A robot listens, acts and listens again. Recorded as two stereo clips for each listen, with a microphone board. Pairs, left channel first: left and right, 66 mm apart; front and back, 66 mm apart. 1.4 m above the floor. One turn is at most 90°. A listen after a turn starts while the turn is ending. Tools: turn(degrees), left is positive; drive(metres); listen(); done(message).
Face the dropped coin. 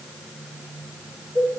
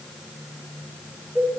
listen()
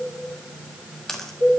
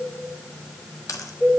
done("Found it: a dropped coin, straight ahead.")